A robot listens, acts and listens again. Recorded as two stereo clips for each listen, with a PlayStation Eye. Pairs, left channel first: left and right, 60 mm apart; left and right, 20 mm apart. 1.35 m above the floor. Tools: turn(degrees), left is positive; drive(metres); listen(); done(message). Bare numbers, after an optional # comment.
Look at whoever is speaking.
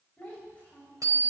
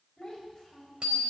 # The child speaking: about 25° left or 155° left.
turn(25)
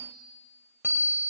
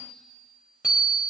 listen()
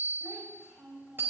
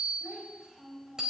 done("Found it: a child speaking, straight ahead.")